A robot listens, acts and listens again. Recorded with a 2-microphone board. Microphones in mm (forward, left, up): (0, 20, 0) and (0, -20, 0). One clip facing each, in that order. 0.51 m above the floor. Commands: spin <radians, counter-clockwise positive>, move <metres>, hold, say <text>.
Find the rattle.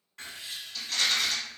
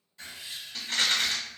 spin -0.70
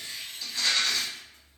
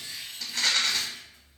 spin -1.75
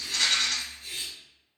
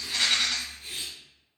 spin -0.35
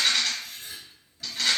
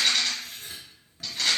say Facing the rattle.